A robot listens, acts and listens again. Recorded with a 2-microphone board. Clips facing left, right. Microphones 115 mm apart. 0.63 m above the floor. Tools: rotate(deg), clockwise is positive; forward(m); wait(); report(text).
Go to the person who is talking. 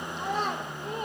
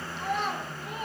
rotate(-40)
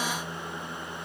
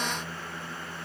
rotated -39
wait()
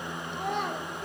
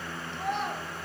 rotate(-100)
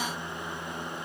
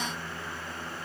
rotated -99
wait()
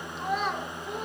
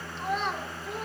forward(1.0)
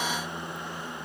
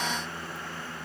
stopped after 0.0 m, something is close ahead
wait()
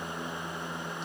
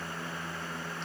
wait()
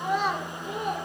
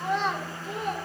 rotate(-10)
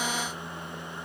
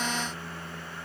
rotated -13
wait()
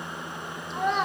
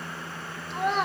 report("Blocked. The child speaking is further on, straight ahead.")